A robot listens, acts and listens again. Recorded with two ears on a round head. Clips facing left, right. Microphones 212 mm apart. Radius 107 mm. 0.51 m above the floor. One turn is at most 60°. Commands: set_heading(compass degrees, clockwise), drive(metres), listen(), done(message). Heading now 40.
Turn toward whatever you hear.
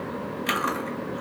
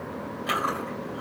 set_heading(5)
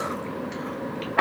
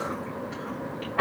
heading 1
set_heading(301)
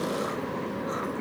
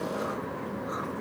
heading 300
set_heading(260)
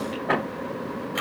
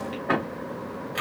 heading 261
done("Found it: chewing, straight ahead.")